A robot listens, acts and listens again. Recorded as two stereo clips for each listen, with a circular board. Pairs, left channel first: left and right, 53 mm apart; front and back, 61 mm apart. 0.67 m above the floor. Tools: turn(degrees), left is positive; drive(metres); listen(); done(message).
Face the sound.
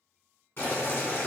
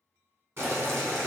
turn(degrees=135)
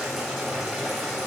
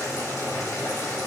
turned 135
done("Facing the boiling, 1 to 2 m away.")